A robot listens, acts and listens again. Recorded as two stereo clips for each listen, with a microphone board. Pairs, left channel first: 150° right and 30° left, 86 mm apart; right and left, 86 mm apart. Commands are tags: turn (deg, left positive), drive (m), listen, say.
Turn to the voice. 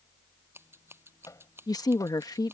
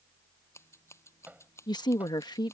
<turn deg="-115"/>
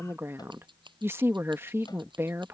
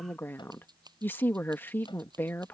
<turn deg="-25"/>
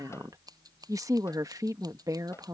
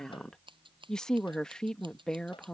<turn deg="-10"/>
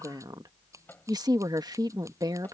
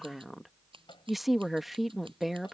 <say>Facing the woman speaking.</say>